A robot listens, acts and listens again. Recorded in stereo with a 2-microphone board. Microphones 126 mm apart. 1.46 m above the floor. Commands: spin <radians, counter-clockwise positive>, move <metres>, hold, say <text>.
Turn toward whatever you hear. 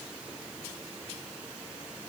hold
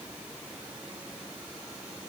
hold
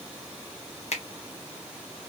spin 1.05
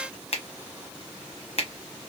spin 0.96
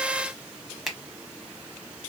say Found it: a finger snap, straight ahead, under 1 m away.